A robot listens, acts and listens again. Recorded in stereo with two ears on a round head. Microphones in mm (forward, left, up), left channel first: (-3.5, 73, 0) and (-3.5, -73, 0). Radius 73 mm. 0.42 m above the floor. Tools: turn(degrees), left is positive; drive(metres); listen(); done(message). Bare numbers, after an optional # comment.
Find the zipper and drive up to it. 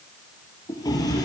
listen()
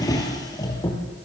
listen()
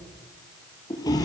done("I can't make out a zipper to turn to.")